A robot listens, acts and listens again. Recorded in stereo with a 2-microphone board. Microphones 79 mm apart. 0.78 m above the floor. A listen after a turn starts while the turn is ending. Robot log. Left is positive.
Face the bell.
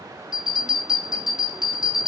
cmd yaw -30
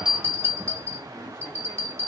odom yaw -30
note: So it is at 140° right.
cmd yaw -140
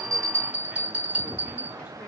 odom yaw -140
note: The bell is now 20° right.
cmd yaw -20
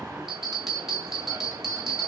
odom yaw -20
end: Found it: a bell, straight ahead, 2 to 4 m away.